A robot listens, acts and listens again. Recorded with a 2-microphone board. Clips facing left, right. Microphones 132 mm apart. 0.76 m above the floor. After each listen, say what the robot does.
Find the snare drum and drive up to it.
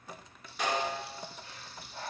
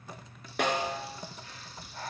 Turn 60° right.
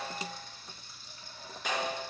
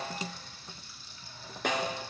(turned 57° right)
Turn 60° right.
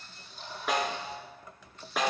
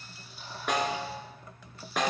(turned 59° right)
Drive 1.0 m forward.
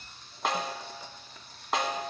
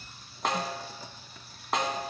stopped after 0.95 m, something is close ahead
I am next to the snare drum.